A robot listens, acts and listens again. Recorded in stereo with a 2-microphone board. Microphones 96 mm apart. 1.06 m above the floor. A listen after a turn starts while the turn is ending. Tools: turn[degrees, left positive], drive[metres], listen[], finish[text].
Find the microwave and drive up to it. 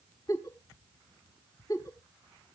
Action: listen[]
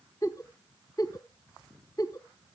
Action: listen[]
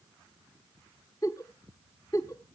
Action: finish[I can't make out a microwave to turn to.]